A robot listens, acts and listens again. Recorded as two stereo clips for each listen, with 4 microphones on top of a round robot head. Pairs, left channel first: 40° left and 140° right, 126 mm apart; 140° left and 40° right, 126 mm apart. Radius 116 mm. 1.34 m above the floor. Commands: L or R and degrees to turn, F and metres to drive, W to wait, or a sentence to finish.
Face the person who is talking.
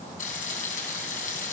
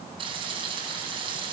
W
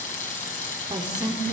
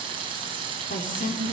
L160
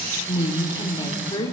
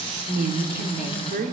R20
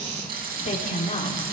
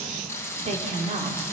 Facing the woman speaking.